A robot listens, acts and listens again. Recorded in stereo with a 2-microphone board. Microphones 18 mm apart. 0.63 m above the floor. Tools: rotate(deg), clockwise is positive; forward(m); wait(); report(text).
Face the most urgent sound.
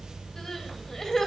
rotate(-30)
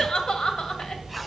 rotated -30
rotate(-120)
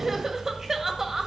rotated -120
rotate(25)
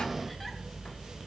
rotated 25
wait()
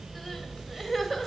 rotate(-10)
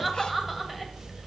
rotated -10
report("Found it: crying, straight ahead.")